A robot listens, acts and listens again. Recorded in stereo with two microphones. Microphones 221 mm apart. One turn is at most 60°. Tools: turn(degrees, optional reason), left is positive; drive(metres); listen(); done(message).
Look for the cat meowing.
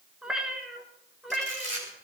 turn(degrees=30)
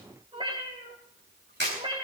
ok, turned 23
turn(degrees=-25, reason="So it is at 25° right.")
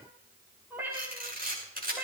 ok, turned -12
turn(degrees=-10, reason="The cat meowing is now 10° right.")
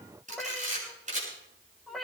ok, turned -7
done("Found it: a cat meowing, straight ahead, over 4 m away.")